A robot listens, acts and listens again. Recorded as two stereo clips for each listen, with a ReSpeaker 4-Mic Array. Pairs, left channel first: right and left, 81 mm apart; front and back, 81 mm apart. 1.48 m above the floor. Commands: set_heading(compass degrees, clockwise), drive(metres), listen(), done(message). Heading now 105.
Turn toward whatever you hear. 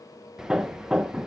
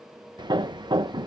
set_heading(290)
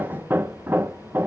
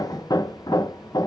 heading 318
set_heading(293)
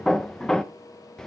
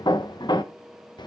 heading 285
set_heading(295)
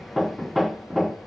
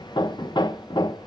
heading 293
done("Facing the hammering, under 1 m away.")